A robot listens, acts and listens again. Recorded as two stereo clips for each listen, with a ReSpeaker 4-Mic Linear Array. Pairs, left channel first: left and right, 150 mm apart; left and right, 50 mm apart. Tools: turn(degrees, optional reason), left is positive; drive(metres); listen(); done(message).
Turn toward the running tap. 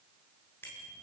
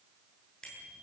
listen()
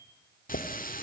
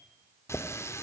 turn(degrees=70, reason="The running tap: about 70° left or 110° left.")
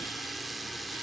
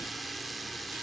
done("Found it: a running tap, straight ahead.")